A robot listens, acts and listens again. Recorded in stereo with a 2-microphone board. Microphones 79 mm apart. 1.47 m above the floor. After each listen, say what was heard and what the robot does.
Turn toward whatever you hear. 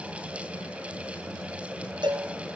The cowbell: about 65° right or 115° right. Turn 65° right.
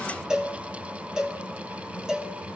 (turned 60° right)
Facing the cowbell.